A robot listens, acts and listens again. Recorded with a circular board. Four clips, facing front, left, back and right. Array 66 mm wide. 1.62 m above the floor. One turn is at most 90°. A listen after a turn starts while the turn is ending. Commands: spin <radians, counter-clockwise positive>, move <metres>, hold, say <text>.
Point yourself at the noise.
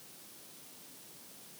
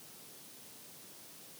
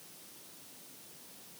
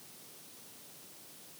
hold
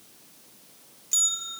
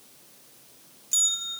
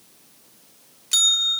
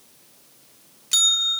spin -1.57
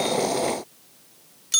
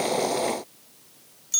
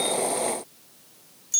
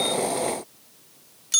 spin -0.70
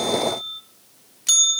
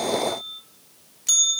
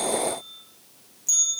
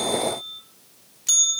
say Facing the bell, under 1 m away.